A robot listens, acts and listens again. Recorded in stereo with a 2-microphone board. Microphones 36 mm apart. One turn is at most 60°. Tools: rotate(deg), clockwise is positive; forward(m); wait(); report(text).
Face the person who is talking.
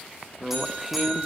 rotate(30)
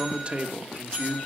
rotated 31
rotate(60)
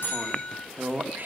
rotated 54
rotate(60)
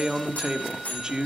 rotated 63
rotate(25)
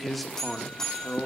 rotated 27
report("Found it: a man speaking, straight ahead.")